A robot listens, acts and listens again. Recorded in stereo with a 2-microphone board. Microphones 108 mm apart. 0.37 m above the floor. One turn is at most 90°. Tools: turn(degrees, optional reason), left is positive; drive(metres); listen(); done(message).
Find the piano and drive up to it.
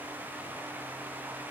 listen()
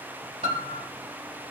turn(degrees=-70, reason="The piano: about 70° right or 110° right.")
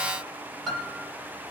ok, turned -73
drive(metres=1.0)
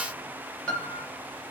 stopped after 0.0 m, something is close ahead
turn(degrees=10, reason="The piano is now 10° left.")
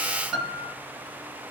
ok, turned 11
done("Blocked. The piano is further on, straight ahead.")